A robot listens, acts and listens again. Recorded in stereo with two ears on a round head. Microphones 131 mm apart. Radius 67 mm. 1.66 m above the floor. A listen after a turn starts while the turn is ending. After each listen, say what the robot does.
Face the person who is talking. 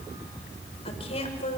Turn 50° left.
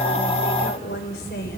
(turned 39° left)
Turn 100° left.
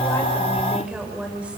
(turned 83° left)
Turn 10° right.
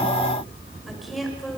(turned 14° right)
Found it: a woman speaking, straight ahead, over 4 m away.